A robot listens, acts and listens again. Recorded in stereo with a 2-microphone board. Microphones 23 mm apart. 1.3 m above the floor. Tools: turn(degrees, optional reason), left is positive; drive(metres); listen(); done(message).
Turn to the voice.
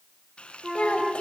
turn(degrees=50, reason="The child speaking: about 50° left or 130° left.")
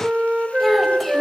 listen()
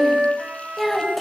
done("Facing the child speaking.")